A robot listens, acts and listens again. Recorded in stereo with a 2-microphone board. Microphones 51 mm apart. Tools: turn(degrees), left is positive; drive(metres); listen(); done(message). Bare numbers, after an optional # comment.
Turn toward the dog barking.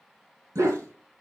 # The dog barking: about 70° right or 110° right.
turn(-70)
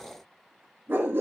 # So it is at 50° right.
turn(-50)
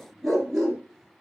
done("Found it: a dog barking, straight ahead, 2 to 4 m away.")